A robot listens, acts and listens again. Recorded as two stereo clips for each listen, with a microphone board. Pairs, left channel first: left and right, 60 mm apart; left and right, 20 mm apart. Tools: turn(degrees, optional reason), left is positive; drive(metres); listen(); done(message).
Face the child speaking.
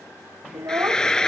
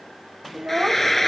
turn(degrees=-50, reason="The child speaking: about 50° right or 130° right.")
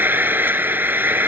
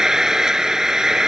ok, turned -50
listen()
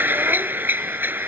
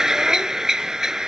listen()
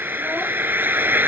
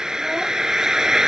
done("I heard a child speaking, but can't make it out now. It was about straight ahead or 80° right.")